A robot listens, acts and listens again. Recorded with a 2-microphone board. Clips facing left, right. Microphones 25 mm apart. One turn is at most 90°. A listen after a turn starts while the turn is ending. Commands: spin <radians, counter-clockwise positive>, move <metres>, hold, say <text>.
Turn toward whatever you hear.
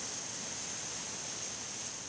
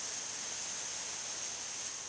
hold
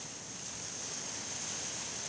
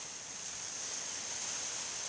hold
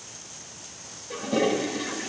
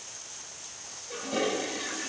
spin 0.52
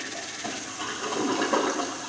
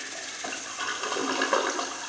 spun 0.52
spin -0.35
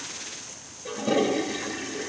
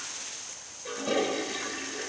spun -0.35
say Found it: a toilet flushing, straight ahead.